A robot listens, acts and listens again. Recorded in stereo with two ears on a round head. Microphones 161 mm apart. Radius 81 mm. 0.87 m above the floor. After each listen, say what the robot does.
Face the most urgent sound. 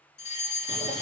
Turn 40° left.
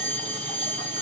Turn 10° left.
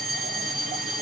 Facing the fire alarm.